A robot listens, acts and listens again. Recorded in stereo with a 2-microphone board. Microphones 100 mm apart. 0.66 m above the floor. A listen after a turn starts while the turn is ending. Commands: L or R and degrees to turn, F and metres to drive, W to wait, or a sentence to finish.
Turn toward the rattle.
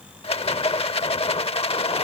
L90
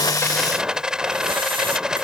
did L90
R10
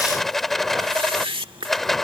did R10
Found it: a rattle, straight ahead.